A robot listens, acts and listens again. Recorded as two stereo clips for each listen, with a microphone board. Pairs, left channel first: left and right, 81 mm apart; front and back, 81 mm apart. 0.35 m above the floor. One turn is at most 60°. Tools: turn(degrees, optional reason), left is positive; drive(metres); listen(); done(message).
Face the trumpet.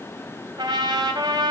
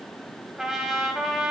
turn(degrees=-60, reason="The trumpet: 100° right.")
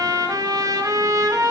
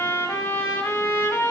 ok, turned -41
turn(degrees=-60, reason="The trumpet is now 60° right.")
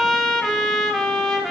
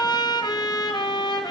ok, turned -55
done("Facing the trumpet, under 1 m away.")